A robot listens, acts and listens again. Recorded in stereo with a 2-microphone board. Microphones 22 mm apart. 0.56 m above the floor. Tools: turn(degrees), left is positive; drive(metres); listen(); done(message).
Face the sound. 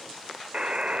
turn(degrees=-55)
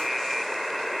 done("Found it: a buzzer, straight ahead, under 1 m away.")